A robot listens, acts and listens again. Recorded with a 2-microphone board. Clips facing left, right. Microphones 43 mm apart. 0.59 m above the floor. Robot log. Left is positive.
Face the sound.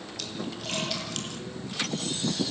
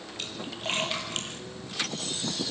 note: The splash: about 30° right or 150° right.
cmd yaw -30
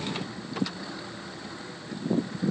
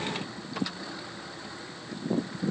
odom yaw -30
cmd idle
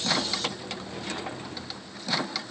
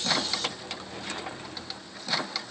end: I heard a splash, but can't make it out now. It was about straight ahead or 120° right.